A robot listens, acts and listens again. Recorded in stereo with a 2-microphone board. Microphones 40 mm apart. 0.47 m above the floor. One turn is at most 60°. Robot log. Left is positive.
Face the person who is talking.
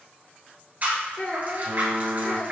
note: The child speaking: about 35° left or 145° left.
cmd yaw +35
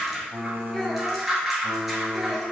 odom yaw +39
cmd idle
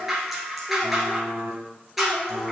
cmd idle
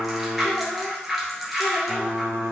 end: I heard a child speaking, but can't make it out now. It was about 5° right or 105° left.